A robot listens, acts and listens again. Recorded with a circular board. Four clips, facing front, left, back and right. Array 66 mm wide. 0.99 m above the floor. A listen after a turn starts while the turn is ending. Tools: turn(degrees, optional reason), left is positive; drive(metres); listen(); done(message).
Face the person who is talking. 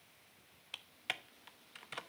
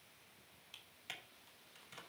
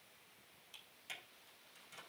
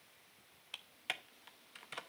listen()
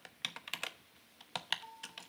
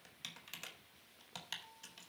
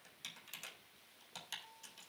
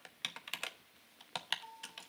listen()
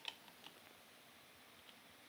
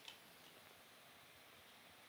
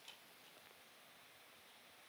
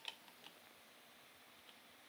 done("I can't make out anyone speaking, only typing on a keyboard.")